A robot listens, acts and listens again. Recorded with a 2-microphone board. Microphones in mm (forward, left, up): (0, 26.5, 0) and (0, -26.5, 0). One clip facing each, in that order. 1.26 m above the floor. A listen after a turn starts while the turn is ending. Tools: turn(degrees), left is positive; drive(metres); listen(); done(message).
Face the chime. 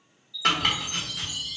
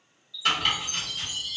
turn(degrees=60)
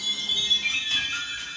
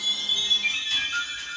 done("Found it: a chime, straight ahead.")